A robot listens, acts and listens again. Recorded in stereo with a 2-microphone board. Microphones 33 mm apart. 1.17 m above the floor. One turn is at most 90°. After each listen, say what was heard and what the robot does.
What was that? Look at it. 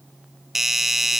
Turn 30° right.
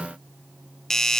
So it is at 15° left. Turn 15° left.
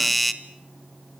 Facing the doorbell, 1 to 2 m away.